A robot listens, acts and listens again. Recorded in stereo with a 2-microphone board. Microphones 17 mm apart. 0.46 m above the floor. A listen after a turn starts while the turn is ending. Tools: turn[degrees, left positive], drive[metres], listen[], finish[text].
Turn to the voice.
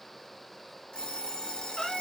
Action: listen[]
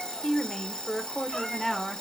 Thought: The woman speaking: about 20° left or 160° left.
Action: turn[20]
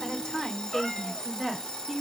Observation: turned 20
Action: turn[30]
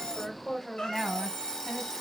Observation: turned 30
Thought: The woman speaking: about 30° left or 150° left.
Action: turn[30]
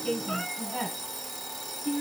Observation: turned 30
Thought: So it is at 120° left.
Action: turn[120]
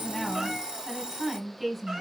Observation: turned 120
Thought: The woman speaking is now 10° right.
Action: turn[-10]
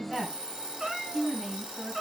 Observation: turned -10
Action: finish[Found it: a woman speaking, straight ahead.]